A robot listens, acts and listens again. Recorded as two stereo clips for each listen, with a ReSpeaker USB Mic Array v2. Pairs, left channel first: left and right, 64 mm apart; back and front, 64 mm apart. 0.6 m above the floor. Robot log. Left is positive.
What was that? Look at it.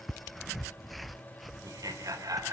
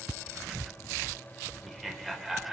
note: The laughter: 80° right.
cmd yaw -80
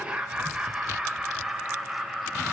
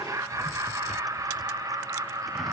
end: Found it: laughter, straight ahead.